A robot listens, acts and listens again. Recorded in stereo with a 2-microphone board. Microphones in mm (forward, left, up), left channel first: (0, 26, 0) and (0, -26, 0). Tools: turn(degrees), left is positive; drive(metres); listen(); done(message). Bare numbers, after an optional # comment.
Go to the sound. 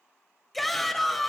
turn(30)
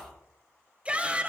# So it is at 25° right.
turn(-25)
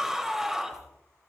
drive(1.0)
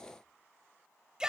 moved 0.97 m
# The shout is now 15° right.
turn(-15)
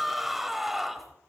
drive(1.0)
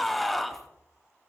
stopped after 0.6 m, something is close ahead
done("I am next to the shout.")